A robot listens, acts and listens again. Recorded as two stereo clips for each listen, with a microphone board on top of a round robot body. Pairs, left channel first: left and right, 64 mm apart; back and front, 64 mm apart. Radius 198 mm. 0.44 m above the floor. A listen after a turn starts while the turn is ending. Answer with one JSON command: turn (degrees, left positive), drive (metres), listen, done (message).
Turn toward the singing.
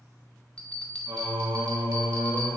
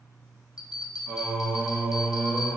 {"turn": -80}
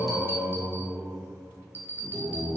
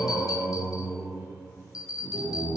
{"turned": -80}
{"turn": -35}
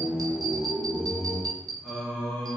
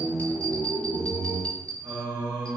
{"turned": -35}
{"turn": 10}
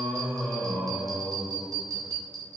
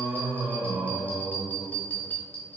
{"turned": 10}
{"done": "Found it: singing, straight ahead, 1 to 2 m away."}